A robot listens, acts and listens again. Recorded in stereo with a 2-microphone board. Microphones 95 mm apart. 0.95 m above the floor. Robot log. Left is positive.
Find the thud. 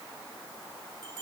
cmd idle
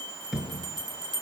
cmd yaw -30
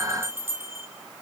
cmd idle
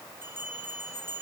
end: I heard a thud, but can't make it out now. It was about 25° left or 145° right.